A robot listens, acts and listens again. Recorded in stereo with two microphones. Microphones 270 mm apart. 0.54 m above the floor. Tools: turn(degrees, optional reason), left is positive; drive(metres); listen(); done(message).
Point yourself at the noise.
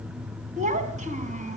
turn(degrees=-25, reason="The child speaking: about 25° right or 155° right.")
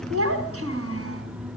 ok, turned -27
turn(degrees=-125, reason="So it is at 125° right.")
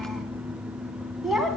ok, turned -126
done("Found it: a child speaking, straight ahead.")